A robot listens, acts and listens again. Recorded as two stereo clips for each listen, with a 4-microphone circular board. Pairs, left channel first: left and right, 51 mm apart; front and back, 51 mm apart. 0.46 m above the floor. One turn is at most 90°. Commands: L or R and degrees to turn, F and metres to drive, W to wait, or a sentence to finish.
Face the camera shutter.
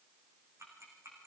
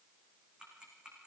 W
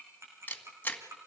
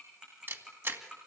L90
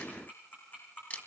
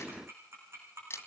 L30
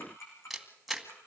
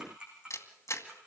Found it: a camera shutter, straight ahead, 2 to 4 m away.